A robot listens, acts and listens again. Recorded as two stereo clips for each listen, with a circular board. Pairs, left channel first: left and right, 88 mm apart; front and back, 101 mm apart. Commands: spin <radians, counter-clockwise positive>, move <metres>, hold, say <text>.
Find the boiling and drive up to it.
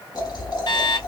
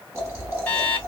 spin 2.09
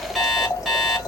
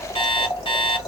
spin 0.79
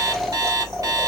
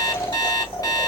move 1.0
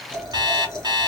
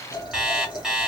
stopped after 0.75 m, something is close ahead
say I am next to the boiling.